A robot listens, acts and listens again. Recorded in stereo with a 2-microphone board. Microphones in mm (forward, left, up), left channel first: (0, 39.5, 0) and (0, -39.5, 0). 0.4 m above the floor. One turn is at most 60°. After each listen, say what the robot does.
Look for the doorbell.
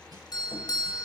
Turn 60° left.
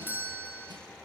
Turn 30° left.
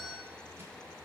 Found it: a doorbell, straight ahead, 2 to 4 m away.